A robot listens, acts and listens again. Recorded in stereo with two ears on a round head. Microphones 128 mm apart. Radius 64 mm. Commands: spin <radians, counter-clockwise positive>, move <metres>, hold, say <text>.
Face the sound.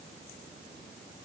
hold
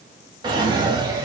spin -0.52
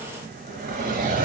spin -2.01
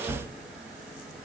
say Found it: a drawer, straight ahead.